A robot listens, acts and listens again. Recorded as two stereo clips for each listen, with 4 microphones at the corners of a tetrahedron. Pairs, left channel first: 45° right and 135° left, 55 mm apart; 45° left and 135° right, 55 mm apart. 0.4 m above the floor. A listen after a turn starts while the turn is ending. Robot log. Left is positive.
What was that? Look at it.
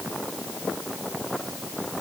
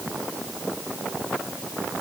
cmd idle
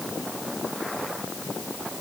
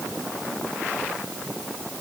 cmd idle
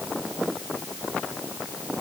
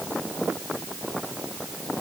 end: I can't make out anything.